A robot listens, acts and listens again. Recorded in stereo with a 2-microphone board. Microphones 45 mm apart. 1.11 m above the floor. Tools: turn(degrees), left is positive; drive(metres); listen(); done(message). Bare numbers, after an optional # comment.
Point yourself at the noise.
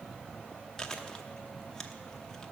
# The chewing: about 15° left or 165° left.
turn(15)
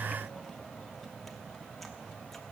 listen()
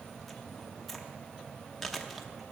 done("Facing the chewing.")